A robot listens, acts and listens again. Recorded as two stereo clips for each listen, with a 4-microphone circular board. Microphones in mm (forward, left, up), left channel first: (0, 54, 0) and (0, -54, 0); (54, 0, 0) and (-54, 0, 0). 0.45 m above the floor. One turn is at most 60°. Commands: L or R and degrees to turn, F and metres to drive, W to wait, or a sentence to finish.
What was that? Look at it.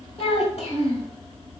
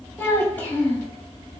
L60
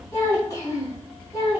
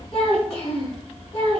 L35
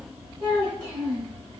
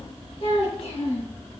L15
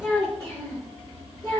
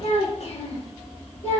L15
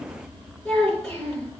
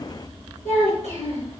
Found it: a child speaking, straight ahead, over 4 m away.